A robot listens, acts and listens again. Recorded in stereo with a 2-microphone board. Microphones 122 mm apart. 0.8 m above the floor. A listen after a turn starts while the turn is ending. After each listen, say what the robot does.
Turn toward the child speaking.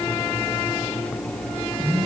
Keep listening.
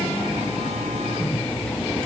Keep listening.
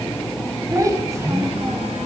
Turn 25° right.
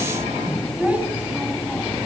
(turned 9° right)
Turn 30° right.
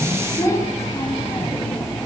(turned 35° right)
Turn 25° left.
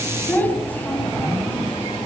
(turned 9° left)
Turn 15° left.
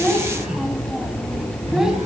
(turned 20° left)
Facing the child speaking, 2 to 4 m away.